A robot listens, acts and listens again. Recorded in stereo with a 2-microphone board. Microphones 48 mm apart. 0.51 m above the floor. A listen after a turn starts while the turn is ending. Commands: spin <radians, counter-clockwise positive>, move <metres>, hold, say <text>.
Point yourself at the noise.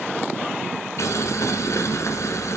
spin 1.31
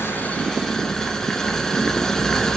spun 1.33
spin 0.17
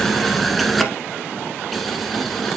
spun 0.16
say Facing the boiling.